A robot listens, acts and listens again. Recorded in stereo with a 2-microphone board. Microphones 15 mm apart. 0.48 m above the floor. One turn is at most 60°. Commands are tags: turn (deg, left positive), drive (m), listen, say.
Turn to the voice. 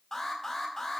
<listen/>
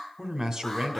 <turn deg="-45"/>
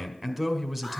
<turn deg="-15"/>
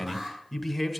<say>Found it: a man speaking, straight ahead, 1 to 2 m away.</say>